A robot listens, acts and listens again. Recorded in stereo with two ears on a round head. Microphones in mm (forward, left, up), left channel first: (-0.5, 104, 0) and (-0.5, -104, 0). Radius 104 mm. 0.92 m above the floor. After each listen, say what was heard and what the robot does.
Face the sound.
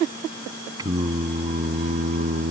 The singing: about 35° right or 145° right. Turn 35° right.
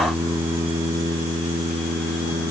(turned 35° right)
So it is at 20° right. Turn 20° right.
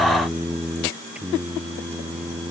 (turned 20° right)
The singing is now 10° right. Turn 10° right.
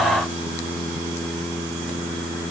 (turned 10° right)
Found it: singing, straight ahead.